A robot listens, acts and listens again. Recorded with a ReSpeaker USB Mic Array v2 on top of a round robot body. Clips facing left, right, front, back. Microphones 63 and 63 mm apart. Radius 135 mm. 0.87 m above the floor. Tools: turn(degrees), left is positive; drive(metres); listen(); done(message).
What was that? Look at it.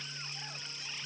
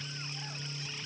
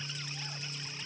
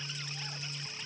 listen()
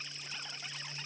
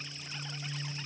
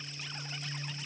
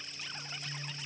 listen()
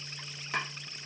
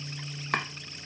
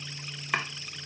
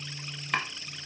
turn(degrees=-80)
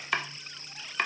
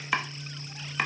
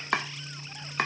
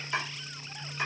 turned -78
done("Facing the chopping, under 1 m away.")